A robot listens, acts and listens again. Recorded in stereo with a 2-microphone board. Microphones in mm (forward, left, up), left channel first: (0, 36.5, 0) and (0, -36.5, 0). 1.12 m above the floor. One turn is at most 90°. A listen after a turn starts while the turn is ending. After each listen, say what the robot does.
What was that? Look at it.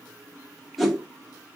Turn 30° left.
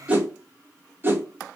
Turn 30° right.
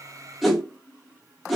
Found it: a whoosh, straight ahead, under 1 m away.